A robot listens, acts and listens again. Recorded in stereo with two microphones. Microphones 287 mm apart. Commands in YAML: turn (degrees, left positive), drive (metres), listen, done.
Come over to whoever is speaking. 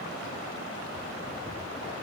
listen: true
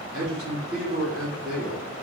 turn: -50
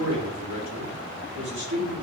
turn: -80
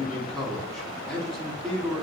drive: 1.0
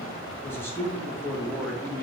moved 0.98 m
turn: 10
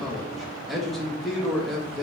drive: 1.0
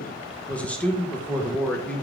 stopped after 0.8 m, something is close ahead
done: "I am next to the man speaking."